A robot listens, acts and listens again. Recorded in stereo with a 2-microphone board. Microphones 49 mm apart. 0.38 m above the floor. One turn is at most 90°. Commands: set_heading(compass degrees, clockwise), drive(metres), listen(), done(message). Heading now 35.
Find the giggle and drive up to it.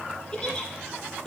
set_heading(20)
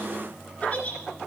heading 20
set_heading(290)
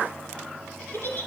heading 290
set_heading(240)
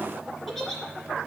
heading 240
drive(1.0)
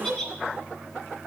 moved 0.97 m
set_heading(230)
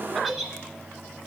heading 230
drive(1.0)
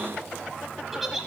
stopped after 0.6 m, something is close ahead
done("Arrived at the giggle, straight ahead.")